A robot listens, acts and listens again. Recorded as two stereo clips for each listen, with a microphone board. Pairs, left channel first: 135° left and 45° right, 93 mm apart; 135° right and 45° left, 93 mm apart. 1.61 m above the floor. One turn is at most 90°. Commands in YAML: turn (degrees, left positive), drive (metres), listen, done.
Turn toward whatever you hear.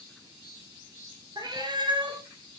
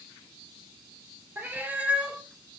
turn: -30
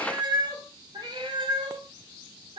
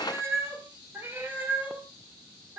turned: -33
turn: -30
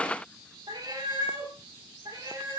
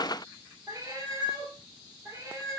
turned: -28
turn: -10
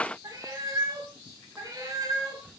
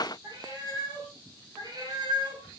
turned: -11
done: "Found it: a cat meowing, straight ahead."